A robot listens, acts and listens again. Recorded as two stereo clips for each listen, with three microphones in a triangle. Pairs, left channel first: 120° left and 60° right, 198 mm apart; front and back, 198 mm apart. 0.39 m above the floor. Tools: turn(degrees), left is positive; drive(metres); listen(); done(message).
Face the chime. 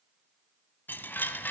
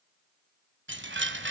turn(degrees=-160)
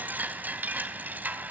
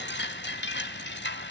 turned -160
turn(degrees=20)
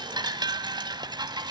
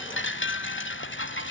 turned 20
turn(degrees=10)
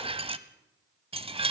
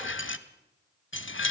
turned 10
done("Facing the chime.")